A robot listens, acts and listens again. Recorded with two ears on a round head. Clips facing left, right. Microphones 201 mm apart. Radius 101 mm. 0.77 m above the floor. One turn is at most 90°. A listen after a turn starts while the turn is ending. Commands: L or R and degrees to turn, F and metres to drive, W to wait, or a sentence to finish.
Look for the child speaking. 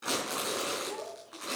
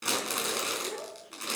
R90
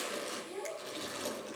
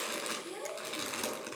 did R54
R50
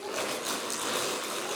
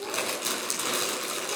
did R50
W
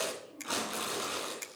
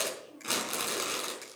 R15
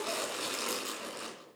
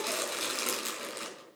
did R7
R10
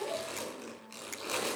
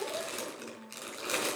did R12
Facing the child speaking.